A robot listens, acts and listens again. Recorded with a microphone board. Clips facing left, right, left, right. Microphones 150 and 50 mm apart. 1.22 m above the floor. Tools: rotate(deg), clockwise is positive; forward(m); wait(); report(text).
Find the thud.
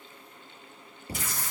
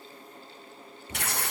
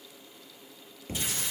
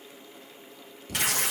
rotate(-35)
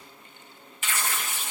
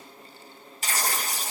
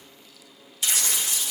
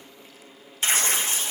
wait()
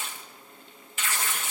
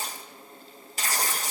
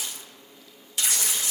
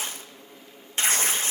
report("I heard a thud, but can't make it out now. It was about straight ahead or 110° left.")